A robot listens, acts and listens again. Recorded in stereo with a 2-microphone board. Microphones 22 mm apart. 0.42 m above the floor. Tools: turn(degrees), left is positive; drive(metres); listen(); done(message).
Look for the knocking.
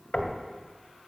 turn(degrees=55)
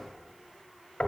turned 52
turn(degrees=65)
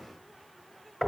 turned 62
done("Found it: knocking, straight ahead.")